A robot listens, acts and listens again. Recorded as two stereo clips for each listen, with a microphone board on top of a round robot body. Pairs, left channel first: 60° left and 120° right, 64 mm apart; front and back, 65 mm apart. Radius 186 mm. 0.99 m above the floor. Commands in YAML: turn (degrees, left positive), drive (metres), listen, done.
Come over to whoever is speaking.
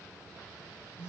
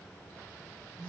listen: true
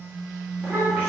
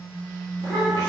turn: 175
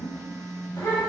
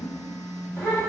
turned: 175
turn: 35
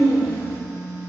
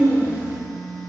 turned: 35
turn: -10
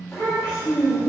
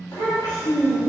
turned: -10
drive: 1.0
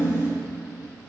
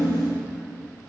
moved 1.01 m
drive: 1.0
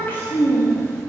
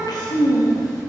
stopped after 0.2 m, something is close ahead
done: "Arrived at the child speaking, straight ahead."